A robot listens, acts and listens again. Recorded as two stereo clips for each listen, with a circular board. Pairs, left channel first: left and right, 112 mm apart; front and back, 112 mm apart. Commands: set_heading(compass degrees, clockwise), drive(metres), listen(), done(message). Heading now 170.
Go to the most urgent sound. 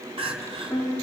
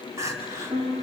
set_heading(290)
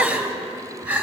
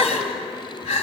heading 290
set_heading(305)
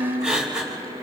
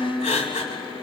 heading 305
set_heading(315)
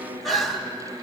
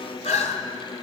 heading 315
drive(1.0)
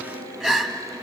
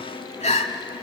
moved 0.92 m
drive(1.0)
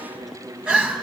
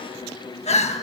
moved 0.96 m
set_heading(325)
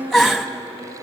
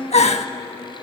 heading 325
drive(1.0)
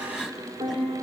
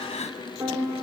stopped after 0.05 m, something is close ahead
done("Arrived at the crying, straight ahead.")